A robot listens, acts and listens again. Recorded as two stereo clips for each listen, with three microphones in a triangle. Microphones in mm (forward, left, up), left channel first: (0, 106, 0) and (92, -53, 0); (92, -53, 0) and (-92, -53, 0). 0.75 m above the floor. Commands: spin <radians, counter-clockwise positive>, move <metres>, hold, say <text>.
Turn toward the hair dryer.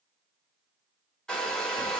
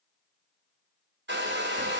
spin -2.71
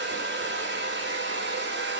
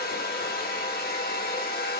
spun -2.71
spin -0.70
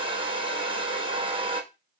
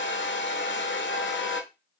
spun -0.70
say Found it: a hair dryer, straight ahead, under 1 m away.